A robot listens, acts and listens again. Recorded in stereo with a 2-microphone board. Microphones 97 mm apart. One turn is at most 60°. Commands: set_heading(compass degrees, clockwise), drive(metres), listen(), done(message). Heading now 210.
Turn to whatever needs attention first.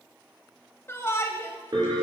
set_heading(185)
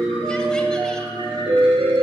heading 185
listen()
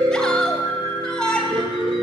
set_heading(175)
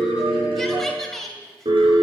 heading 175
done("Found it: a shout, straight ahead, 1 to 2 m away.")